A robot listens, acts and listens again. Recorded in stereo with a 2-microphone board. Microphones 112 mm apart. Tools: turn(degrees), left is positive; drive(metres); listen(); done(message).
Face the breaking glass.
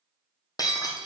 turn(degrees=35)
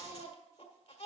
listen()
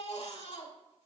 done("I heard breaking glass, but can't make it out now. It was about straight ahead or 110° left.")